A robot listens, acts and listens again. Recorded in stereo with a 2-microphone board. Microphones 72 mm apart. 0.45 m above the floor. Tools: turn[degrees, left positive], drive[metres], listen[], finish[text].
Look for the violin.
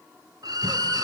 Thought: The violin: about 65° right or 115° right.
Action: turn[-65]
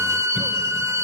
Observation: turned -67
Thought: So it is at 45° right.
Action: turn[-45]
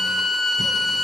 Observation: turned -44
Action: finish[Found it: a violin, straight ahead.]